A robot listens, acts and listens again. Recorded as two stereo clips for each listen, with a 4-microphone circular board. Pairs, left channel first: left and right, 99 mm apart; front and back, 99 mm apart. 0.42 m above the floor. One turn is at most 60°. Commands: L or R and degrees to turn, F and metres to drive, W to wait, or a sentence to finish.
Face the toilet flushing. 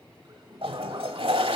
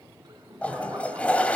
R60
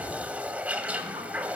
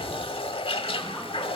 R15
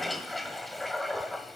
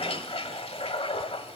Found it: a toilet flushing, straight ahead, 1 to 2 m away.